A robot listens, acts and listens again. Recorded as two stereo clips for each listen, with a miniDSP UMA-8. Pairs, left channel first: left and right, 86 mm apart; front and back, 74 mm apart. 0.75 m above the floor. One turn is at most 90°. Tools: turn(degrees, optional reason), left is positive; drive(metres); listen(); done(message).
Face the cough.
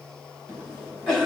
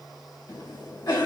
turn(degrees=10, reason="The cough: 10° left.")
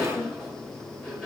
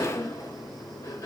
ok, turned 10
done("Found it: a cough, straight ahead.")